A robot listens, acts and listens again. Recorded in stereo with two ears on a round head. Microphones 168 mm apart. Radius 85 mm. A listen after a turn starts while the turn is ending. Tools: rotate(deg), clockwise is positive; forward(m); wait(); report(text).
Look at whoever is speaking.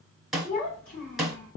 rotate(-40)
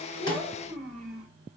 report("Facing the child speaking, 2 to 4 m away.")